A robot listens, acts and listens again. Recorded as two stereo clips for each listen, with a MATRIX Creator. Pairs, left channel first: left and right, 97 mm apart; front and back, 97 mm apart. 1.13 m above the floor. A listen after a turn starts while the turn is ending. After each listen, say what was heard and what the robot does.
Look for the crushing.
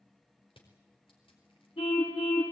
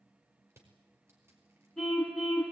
The crushing: 115° left. Turn 115° left.
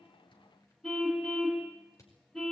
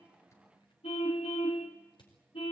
The crushing is now 35° left. Turn 35° left.
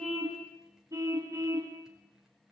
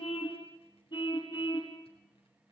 Keep listening.
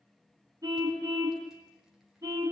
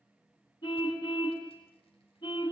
Keep listening.
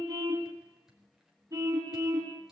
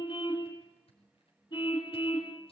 I heard crushing from this way, but can't make it out now.